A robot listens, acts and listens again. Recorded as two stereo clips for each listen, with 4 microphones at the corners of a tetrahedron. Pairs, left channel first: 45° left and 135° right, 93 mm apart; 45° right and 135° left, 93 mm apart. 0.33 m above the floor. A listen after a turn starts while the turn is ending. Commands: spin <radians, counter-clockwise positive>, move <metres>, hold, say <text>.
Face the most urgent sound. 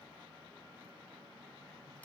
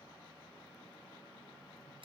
hold
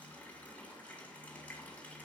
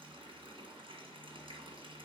hold
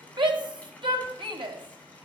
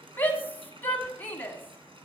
spin -1.92
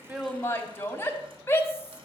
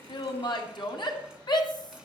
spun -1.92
spin -0.26
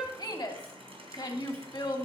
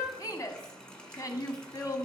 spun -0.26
say Found it: a shout, straight ahead, 1 to 2 m away.